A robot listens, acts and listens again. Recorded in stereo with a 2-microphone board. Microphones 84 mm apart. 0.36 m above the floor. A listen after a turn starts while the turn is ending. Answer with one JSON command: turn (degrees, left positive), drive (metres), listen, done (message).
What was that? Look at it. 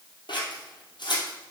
{"turn": 65}
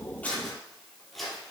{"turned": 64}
{"done": "Facing the scissors."}